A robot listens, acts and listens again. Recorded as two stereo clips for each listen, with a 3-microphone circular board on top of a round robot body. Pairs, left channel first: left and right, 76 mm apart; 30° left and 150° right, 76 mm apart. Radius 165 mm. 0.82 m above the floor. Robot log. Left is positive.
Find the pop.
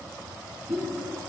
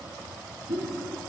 note: The pop: 145° right.
cmd yaw -145
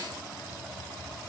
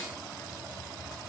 end: Facing where the pop came from. I can't hear it now.